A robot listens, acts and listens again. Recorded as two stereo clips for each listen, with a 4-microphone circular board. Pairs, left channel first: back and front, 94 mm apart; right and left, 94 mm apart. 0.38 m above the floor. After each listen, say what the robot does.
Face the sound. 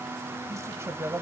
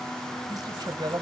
Turn 60° left.
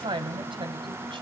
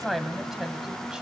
Facing the woman speaking.